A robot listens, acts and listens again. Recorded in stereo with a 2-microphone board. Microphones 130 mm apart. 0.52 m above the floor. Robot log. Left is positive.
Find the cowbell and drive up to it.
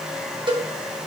note: The cowbell: about 40° right or 140° right.
cmd yaw -40
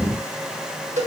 note: So it is at 95° right.
cmd yaw -95
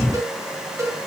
note: The cowbell is now 25° right.
cmd yaw -25
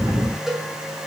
cmd fwd 1.0
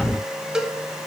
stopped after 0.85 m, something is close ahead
end: Arrived at the cowbell, straight ahead.